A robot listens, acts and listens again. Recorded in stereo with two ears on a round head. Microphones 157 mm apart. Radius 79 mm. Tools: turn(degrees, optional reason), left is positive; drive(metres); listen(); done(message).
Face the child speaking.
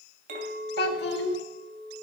turn(degrees=65, reason="The child speaking: about 65° left or 115° left.")
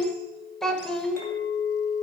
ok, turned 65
done("Found it: a child speaking, straight ahead.")